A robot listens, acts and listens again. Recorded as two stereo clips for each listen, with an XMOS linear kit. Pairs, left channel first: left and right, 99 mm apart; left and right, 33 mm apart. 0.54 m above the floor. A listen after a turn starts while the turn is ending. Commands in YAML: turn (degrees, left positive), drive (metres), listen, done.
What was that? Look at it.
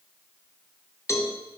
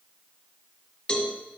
turn: 30
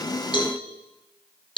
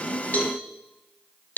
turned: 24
turn: 125
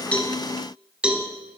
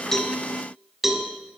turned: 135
turn: -10
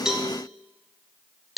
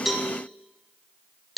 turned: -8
done: "Facing the cowbell."